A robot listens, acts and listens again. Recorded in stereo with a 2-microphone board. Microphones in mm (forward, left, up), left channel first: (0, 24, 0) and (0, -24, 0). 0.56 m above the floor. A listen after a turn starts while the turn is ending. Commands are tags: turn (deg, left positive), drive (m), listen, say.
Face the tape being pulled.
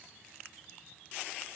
<listen/>
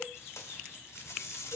<turn deg="70"/>
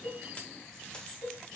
<listen/>
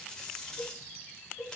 <turn deg="20"/>
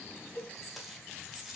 <say>Facing the tape being pulled, 1 to 2 m away.</say>